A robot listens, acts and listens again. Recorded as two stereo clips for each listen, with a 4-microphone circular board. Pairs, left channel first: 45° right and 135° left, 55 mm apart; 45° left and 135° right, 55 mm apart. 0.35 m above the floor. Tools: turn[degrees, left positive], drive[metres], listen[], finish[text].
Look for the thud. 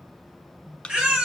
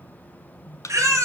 Thought: The thud: 25° left.
Action: turn[25]
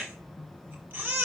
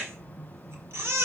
Action: finish[I heard a thud from this way, but can't make it out now.]